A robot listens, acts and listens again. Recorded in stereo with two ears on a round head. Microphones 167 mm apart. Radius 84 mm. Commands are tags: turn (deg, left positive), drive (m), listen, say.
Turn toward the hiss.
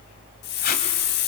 <turn deg="60"/>
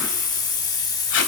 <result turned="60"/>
<turn deg="25"/>
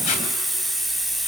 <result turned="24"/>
<say>Found it: a hiss, straight ahead, 1 to 2 m away.</say>